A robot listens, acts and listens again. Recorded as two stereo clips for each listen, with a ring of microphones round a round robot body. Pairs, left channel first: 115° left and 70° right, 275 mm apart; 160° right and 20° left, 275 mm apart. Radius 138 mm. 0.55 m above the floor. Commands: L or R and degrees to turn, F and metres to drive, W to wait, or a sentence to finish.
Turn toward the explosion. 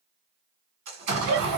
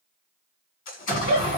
R110
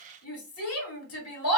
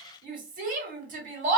Facing where the explosion came from. I can't hear it now.